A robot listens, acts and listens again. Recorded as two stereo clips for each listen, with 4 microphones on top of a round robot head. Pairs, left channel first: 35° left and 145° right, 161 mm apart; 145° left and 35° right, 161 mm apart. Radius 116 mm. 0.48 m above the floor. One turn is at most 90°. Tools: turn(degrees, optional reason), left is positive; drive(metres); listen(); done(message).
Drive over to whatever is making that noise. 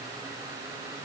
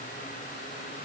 listen()
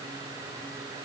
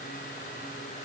listen()
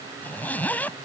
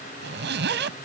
turn(degrees=-45, reason="The zipper: 45° right.")
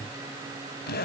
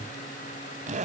turn(degrees=10, reason="The zipper is now 10° left.")
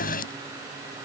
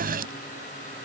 listen()
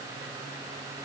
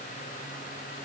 listen()
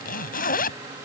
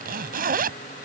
drive(metres=1.0)
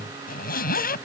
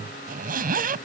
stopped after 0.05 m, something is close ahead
done("Something is in my way. I am facing the zipper but have not reached it.")